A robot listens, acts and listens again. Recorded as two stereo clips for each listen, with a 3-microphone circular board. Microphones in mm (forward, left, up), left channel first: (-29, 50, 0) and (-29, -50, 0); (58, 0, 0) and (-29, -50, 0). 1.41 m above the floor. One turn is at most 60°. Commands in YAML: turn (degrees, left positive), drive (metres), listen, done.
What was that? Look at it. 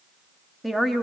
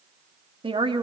turn: 60
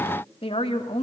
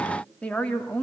turn: 60
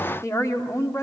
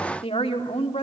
turn: 30
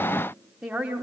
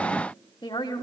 turn: -10
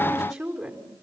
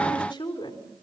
done: "Found it: a woman speaking, straight ahead, over 4 m away."